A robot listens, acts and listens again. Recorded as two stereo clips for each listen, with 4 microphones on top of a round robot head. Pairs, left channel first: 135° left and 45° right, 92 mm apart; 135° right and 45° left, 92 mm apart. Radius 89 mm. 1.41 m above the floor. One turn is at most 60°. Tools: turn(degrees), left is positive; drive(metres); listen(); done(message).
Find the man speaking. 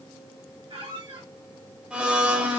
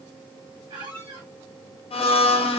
listen()
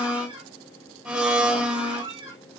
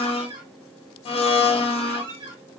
listen()
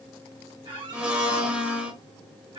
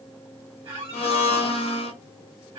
done("I can't make out a man speaking, only a squeak and a blender.")